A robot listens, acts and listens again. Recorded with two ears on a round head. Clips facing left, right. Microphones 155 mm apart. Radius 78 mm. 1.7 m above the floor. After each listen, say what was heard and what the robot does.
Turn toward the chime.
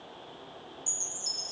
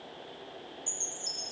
The chime: about 20° left or 160° left. Turn 20° left.
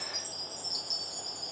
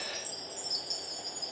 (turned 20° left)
Found it: a chime, straight ahead.